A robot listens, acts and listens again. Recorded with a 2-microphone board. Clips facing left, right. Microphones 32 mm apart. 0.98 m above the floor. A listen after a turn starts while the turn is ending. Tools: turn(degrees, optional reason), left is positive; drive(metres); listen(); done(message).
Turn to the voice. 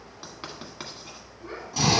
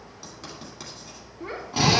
turn(degrees=-90)
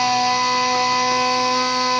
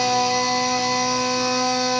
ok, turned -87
listen()
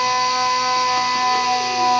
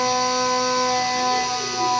listen()
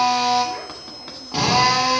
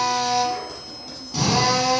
done("I heard a child speaking from this way, but can't make it out now.")